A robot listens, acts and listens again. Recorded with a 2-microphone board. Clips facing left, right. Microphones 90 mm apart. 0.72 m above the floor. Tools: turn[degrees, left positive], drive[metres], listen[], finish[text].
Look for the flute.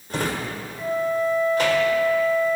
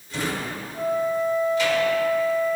Thought: The flute: about 70° right or 110° right.
Action: turn[-70]
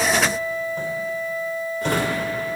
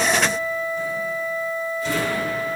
Thought: So it is at 40° right.
Action: turn[-40]
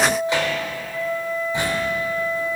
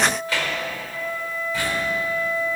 Action: finish[Facing the flute.]